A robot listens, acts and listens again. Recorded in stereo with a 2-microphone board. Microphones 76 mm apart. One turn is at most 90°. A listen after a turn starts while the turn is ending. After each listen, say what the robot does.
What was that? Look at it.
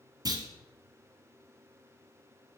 Turn 55° right.
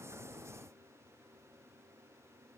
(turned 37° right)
Keep listening.
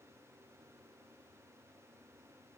I heard a clunk, but can't make it out now. It was about 20° right or 85° right.